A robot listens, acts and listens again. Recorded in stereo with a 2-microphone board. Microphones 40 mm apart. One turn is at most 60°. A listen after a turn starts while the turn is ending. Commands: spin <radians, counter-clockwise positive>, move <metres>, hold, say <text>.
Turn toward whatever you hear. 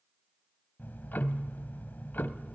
spin 0.87
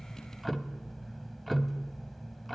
say Facing the ticking.